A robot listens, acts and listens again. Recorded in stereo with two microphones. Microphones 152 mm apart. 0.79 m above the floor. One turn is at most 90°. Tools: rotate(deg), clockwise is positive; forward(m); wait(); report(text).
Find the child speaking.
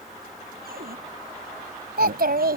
rotate(90)
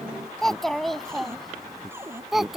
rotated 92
report("Found it: a child speaking, straight ahead.")